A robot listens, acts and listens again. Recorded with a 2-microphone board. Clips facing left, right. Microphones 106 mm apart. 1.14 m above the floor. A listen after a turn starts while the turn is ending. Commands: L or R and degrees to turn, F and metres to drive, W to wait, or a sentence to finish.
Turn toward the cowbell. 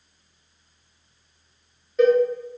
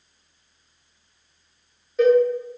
L30
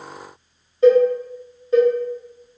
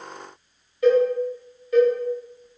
L150
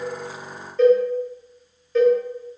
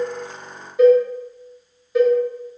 R10
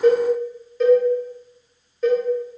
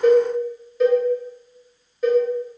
Facing the cowbell, 1 to 2 m away.